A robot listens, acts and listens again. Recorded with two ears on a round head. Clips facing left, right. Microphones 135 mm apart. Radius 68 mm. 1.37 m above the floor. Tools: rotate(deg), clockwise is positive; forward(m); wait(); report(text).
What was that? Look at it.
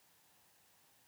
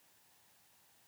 wait()
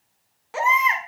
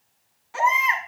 rotate(-65)
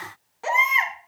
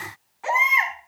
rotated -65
rotate(-45)
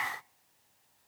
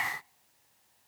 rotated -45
wait()
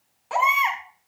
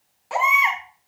report("Found it: a baby crying, straight ahead.")